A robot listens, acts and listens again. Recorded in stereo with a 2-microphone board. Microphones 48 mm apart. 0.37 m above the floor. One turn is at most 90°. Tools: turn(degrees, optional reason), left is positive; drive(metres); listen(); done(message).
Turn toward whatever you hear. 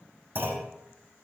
turn(degrees=-40, reason="The clunk: about 40° right or 140° right.")
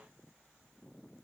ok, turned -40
listen()
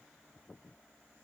done("I heard a clunk, but can't make it out now. It was about straight ahead or 100° right.")